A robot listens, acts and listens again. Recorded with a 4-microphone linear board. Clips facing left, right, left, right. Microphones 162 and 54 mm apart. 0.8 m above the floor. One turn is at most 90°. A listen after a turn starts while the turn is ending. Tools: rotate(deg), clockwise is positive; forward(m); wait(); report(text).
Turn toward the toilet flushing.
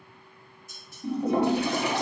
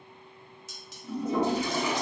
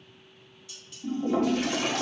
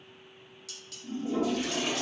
rotate(-60)
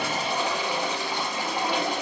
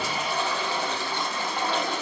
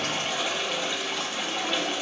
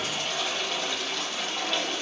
rotate(-15)
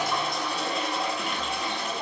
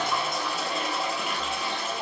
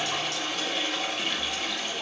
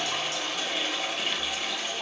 report("Found it: a toilet flushing, straight ahead.")